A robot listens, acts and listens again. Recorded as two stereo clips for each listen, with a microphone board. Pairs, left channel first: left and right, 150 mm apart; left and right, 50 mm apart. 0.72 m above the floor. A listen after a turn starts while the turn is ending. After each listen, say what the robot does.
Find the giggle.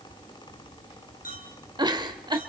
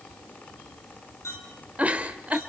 Turn 30° right.
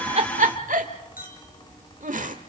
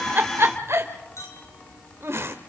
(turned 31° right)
Turn 120° right.
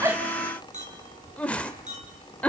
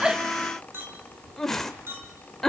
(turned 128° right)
Turn 10° left.
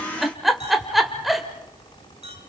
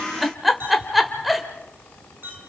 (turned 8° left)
Found it: a giggle, straight ahead, 1 to 2 m away.